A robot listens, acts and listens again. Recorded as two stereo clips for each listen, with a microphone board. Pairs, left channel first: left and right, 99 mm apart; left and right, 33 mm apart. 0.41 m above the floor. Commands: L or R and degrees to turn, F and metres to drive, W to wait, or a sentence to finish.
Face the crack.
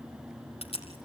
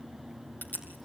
L90
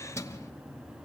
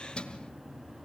I heard a crack from this way, but can't make it out now.